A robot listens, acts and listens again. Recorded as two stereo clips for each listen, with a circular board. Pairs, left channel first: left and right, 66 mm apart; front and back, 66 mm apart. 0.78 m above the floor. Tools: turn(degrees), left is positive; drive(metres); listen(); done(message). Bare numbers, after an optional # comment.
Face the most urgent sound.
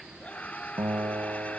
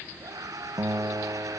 # The scream: 160° left.
turn(160)
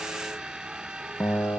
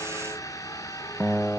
# The scream is now 15° right.
turn(-15)
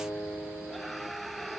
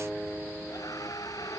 done("Facing the scream.")